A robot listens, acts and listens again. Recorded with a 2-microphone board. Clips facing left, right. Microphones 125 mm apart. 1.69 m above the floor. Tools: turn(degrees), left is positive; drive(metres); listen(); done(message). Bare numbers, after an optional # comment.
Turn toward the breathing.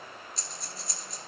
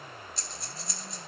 turn(30)
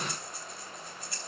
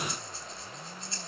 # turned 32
# So it is at 30° right.
turn(-30)
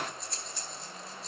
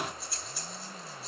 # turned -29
done("Facing the breathing, 2 to 4 m away.")